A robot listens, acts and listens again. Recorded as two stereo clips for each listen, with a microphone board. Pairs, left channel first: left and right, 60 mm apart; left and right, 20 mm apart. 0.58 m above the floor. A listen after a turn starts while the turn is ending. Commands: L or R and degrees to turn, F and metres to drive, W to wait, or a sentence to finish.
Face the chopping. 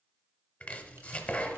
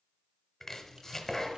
L20
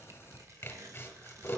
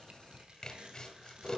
L140
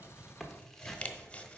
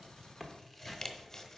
L20
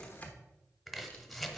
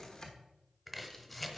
Found it: chopping, straight ahead.